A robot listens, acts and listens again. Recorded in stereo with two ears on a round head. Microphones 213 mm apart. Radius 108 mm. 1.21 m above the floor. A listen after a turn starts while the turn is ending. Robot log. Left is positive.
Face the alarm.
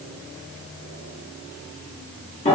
cmd idle
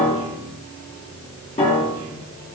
cmd idle
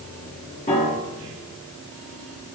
end: I can't make out an alarm to turn to.